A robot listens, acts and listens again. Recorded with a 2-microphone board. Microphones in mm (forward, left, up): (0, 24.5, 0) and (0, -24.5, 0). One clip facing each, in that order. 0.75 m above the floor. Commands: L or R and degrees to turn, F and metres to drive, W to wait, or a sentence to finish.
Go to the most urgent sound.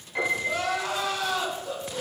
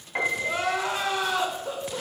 R30
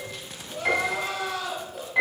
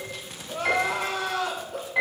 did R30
R120
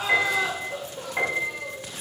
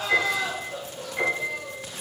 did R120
L20
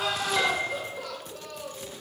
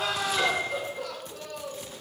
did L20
F1.0
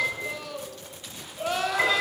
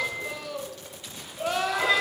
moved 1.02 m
F1.0
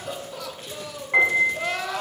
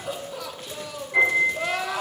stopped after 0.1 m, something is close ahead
I am next to the crying.